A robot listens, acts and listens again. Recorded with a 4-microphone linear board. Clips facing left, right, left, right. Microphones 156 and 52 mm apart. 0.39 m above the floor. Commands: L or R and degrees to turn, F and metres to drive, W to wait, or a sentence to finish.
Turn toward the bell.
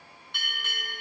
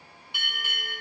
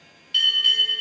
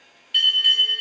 R30
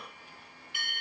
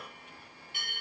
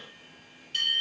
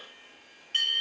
R140
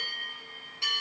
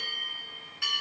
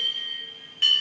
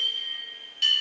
L25
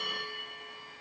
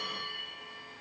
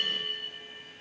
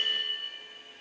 L15
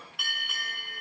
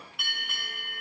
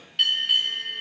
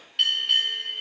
Found it: a bell, straight ahead, 2 to 4 m away.